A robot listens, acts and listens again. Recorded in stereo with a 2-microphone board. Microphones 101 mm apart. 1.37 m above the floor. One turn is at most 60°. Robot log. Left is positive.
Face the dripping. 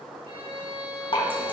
note: The dripping: about 60° left or 120° left.
cmd yaw +60
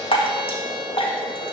note: So it is at 60° left.
cmd yaw +60
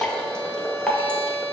note: The dripping is now 10° left.
cmd yaw +10
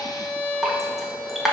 end: Facing the dripping, 1 to 2 m away.